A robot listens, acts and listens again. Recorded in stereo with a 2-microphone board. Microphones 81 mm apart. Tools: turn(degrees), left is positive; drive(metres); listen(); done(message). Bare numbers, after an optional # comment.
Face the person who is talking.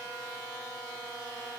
listen()
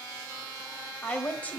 # The woman speaking: about 20° left or 160° left.
turn(20)
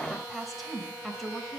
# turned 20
done("Facing the woman speaking.")